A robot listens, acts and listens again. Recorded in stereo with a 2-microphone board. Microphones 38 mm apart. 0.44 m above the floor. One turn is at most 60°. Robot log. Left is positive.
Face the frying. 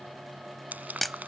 note: The frying: about 50° right or 130° right.
cmd yaw -50
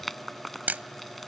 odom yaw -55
end: Found it: frying, straight ahead.